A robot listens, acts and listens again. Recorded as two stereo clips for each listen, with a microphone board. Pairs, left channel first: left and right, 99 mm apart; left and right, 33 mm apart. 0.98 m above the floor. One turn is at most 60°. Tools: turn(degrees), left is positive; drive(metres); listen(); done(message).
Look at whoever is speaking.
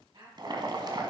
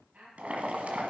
turn(degrees=-60)
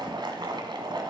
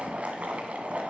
listen()
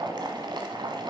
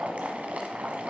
listen()
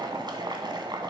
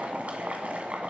done("I heard a woman speaking, but can't make it out now. It was about straight ahead or 60° right.")